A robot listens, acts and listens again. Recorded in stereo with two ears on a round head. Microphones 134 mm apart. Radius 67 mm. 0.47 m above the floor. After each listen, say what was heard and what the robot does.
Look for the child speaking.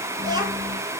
The child speaking: about 30° right or 150° right. Turn 30° right.
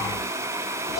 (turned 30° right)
Facing the child speaking, over 4 m away.